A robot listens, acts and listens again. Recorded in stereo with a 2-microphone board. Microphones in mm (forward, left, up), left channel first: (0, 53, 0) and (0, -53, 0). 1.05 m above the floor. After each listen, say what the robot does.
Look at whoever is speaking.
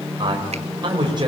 Turn 45° right.
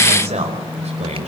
Turn 90° right.
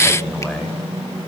Facing the man speaking, over 4 m away.